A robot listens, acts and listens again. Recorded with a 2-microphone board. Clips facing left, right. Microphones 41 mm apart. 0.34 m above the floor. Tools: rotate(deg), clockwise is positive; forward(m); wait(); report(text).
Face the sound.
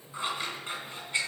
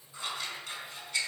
rotate(-30)
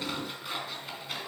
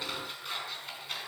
report("Found it: scissors, straight ahead.")